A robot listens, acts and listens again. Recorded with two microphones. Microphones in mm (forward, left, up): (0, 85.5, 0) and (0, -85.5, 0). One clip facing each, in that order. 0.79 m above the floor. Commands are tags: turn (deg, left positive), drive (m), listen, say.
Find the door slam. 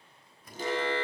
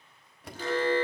<turn deg="-65"/>
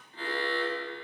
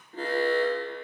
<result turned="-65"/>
<listen/>
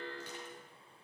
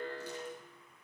<say>I heard a door slam, but can't make it out now. It was about straight ahead or 50° right.</say>